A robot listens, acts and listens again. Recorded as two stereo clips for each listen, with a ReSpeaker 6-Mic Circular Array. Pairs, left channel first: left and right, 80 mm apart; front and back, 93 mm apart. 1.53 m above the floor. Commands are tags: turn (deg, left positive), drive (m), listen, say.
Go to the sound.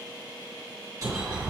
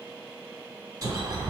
<turn deg="-135"/>
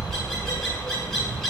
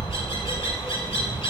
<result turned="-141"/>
<drive m="1.0"/>
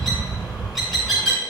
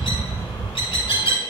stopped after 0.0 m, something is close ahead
<say>Blocked. The bird is further on, straight ahead.</say>